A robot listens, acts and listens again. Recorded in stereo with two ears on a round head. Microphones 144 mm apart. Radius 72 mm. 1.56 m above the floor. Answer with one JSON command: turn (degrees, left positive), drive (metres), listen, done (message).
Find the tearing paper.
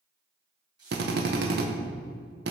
{"turn": -25}
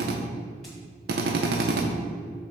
{"listen": true}
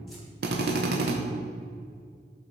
{"listen": true}
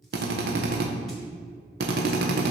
{"done": "I heard tearing paper, but can't make it out now. It was about straight ahead or 130° right."}